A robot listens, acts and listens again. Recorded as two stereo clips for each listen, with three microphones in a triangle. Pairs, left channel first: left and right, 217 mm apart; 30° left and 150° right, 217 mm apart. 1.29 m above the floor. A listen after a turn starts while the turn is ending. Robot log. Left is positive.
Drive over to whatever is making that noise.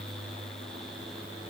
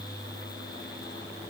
cmd idle
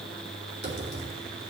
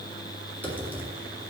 note: The typing on a keyboard: 50° right.
cmd yaw -50
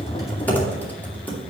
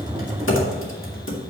note: The typing on a keyboard is now 10° left.
cmd yaw +10
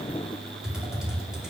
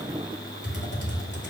cmd fwd 1.0
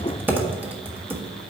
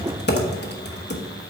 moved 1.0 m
note: The typing on a keyboard is now 10° right.
cmd yaw -10
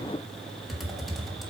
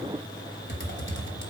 cmd fwd 1.0
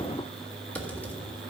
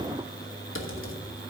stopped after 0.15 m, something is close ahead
note: The typing on a keyboard is now 10° left.
cmd yaw +10
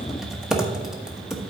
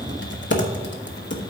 end: Arrived at the typing on a keyboard, straight ahead.